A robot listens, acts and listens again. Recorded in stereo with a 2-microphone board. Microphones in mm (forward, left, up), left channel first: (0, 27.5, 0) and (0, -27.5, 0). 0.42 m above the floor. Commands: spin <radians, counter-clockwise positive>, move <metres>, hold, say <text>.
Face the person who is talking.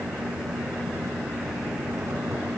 hold
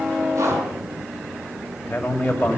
spin 0.44
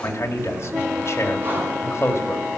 spin 2.18
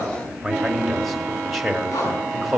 say Found it: a man speaking, straight ahead, 2 to 4 m away.